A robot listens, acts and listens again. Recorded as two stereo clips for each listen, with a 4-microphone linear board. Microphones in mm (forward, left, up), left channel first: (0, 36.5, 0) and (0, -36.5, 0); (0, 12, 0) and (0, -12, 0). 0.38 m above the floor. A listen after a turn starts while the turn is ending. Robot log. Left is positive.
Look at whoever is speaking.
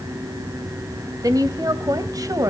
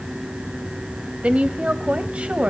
note: The woman speaking: about 60° right or 120° right.
cmd yaw -60
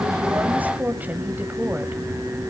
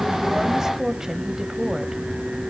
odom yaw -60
note: So it is at 30° right.
cmd yaw -30
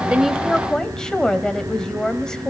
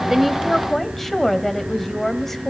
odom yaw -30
note: The woman speaking is now 10° left.
cmd yaw +10
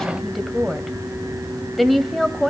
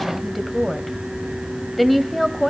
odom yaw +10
end: Facing the woman speaking.